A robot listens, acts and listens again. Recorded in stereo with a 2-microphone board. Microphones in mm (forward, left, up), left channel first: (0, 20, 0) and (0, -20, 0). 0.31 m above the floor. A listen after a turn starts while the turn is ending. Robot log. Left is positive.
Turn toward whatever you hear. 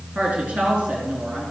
note: The woman speaking: about 25° right or 155° right.
cmd yaw -25
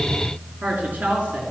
note: The woman speaking: about 40° right or 140° right.
cmd yaw -40
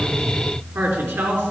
note: So it is at 110° right.
cmd yaw -110
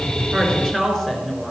note: The woman speaking is now 10° left.
cmd yaw +10
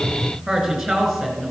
end: Facing the woman speaking.